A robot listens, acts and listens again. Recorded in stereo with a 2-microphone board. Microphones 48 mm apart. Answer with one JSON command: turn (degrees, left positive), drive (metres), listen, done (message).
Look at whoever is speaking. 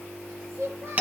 {"turn": -65}
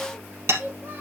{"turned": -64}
{"turn": -40}
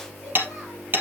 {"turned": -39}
{"listen": true}
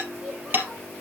{"listen": true}
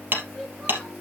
{"done": "I heard a child speaking from this way, but can't make it out now."}